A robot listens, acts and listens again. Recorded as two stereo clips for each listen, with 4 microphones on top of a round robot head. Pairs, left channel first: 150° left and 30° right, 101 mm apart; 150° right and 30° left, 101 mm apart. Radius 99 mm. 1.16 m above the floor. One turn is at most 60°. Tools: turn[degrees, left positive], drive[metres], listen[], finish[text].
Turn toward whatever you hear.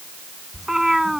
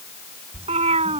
Thought: The cat meowing: 55° left.
Action: turn[55]
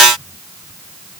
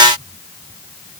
Action: listen[]
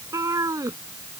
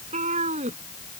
Thought: The cat meowing is now 30° left.
Action: turn[30]
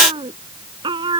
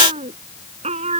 Thought: The cat meowing is now 15° left.
Action: turn[15]
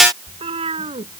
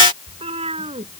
Action: finish[Facing the cat meowing.]